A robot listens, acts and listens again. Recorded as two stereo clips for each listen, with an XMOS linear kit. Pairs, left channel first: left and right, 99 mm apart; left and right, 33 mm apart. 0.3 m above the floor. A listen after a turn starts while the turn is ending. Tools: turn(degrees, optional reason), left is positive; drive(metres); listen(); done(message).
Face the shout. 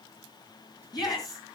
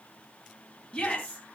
turn(degrees=45, reason="The shout: about 45° left or 135° left.")
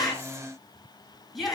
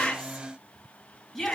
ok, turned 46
done("Found it: a shout, straight ahead.")